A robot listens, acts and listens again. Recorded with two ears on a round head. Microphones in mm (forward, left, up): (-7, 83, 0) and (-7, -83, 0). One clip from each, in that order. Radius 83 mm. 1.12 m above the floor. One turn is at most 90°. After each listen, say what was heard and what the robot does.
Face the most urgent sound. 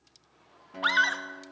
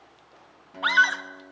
Turn 30° right.
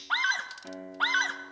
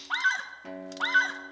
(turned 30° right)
So it is at 20° left. Turn 20° left.
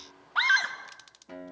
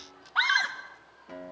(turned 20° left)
Found it: a scream, straight ahead, 2 to 4 m away.